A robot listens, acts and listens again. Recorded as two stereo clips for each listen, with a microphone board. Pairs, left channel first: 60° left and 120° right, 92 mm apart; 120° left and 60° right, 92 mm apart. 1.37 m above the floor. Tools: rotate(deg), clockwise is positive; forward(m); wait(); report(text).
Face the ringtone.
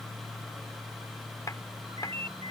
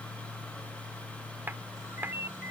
rotate(125)
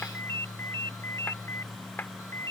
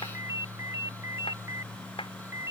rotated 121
report("Found it: a ringtone, straight ahead.")